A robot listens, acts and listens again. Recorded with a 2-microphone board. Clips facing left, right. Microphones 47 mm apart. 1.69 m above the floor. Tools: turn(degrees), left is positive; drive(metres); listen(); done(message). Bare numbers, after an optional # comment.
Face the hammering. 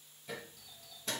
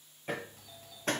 # The hammering: about 50° right or 130° right.
turn(-50)
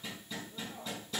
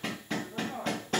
# So it is at 75° right.
turn(-75)
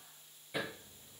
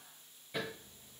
# The hammering is now 10° left.
turn(10)
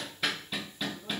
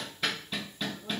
done("Facing the hammering, under 1 m away.")